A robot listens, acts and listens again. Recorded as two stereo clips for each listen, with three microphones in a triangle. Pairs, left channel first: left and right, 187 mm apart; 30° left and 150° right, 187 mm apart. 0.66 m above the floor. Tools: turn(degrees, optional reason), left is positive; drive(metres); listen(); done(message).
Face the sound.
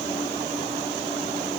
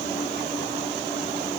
listen()
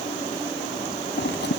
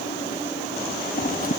turn(degrees=70, reason="The scissors: 70° left.")
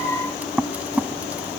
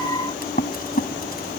turn(degrees=-10, reason="The scissors is now 10° right.")
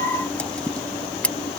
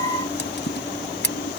done("Facing the scissors.")